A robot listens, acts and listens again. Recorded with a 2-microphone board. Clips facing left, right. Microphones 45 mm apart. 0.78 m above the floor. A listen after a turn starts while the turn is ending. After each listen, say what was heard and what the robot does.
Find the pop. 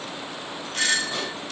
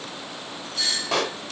Turn 90° right.
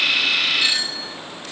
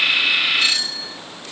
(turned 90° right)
I heard a pop from this way, but can't make it out now.